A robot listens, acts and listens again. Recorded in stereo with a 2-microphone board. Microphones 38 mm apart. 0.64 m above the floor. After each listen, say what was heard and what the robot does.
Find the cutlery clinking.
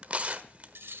The cutlery clinking: about 65° right or 115° right. Turn 65° right.
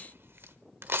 Keep listening.
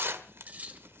So it is at 45° right. Turn 45° right.
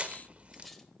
Keep listening.
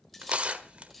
Keep listening.
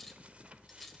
I heard cutlery clinking from this way, but can't make it out now.